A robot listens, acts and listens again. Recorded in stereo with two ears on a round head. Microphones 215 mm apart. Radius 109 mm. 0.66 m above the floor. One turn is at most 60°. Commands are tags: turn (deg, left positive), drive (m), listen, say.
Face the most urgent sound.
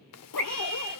<turn deg="30"/>
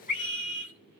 <turn deg="60"/>
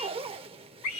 <turn deg="60"/>
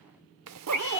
<turn deg="10"/>
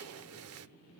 <listen/>
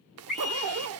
<say>Facing the scream.</say>